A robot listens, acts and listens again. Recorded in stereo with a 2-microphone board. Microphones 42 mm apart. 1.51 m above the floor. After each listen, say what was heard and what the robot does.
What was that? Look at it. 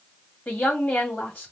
The woman speaking: about 45° left or 135° left. Turn 45° left.
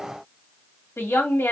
So it is at 90° left. Turn 90° left.
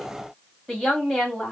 The woman speaking is now 10° left. Turn 10° left.
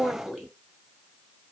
Found it: a woman speaking, straight ahead, 2 to 4 m away.